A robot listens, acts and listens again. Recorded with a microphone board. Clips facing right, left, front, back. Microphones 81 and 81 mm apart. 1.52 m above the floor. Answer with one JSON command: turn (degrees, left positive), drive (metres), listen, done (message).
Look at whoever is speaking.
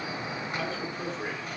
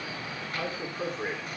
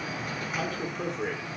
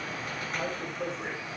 {"turn": 10}
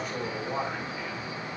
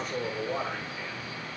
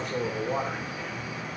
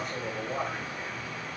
{"done": "Found it: a man speaking, straight ahead, over 4 m away."}